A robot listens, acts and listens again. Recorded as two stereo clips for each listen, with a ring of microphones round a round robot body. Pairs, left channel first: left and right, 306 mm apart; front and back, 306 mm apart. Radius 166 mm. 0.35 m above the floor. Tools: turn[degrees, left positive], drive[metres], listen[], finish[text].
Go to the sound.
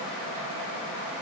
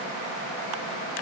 Action: listen[]
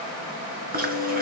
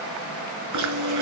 Thought: The chewing: 150° right.
Action: turn[-150]
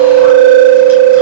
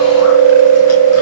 Thought: The chewing is now 40° right.
Action: turn[-40]
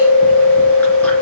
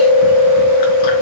Action: drive[1.0]
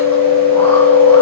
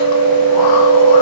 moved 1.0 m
Action: drive[1.0]
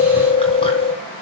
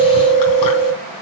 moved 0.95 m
Thought: The chewing is now 15° left.
Action: turn[15]
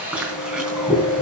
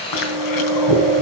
Action: drive[1.0]
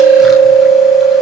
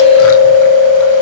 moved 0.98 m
Action: drive[1.0]
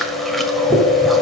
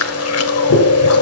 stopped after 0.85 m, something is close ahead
Action: finish[Arrived at the chewing, straight ahead.]